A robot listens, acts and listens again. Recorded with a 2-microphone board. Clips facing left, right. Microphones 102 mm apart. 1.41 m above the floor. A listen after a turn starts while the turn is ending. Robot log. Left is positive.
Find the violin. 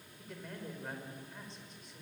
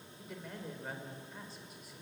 cmd idle
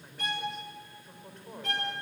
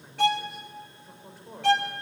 cmd yaw -90
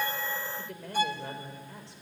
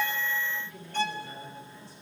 note: So it is at 10° left.
cmd yaw +10
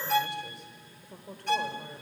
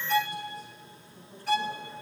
end: Found it: a violin, straight ahead, 1 to 2 m away.